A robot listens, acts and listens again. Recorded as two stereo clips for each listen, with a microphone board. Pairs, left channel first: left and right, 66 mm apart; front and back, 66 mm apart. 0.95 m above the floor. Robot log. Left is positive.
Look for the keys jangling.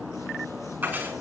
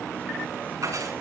note: The keys jangling: 155° right.
cmd yaw -155
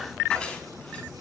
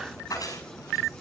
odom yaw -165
note: The keys jangling is now 15° left.
cmd yaw +15
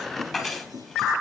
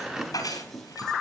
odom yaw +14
end: Found it: keys jangling, straight ahead, over 4 m away.